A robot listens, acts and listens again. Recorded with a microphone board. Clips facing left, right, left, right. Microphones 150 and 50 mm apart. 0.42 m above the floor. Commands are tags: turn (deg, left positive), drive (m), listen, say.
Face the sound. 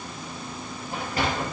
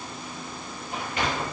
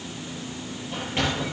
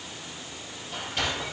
<turn deg="35"/>
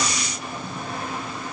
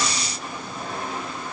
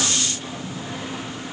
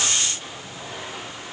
<say>Found it: a sliding door, straight ahead, over 4 m away.</say>